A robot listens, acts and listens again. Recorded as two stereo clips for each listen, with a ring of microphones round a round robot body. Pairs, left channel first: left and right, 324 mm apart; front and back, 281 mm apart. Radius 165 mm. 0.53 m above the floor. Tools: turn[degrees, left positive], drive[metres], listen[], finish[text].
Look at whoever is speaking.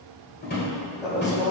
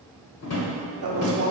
Thought: The woman speaking: 160° left.
Action: turn[160]
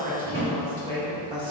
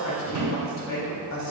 Thought: The woman speaking is now 15° right.
Action: turn[-15]
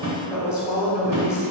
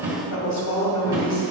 Action: finish[Facing the woman speaking, 1 to 2 m away.]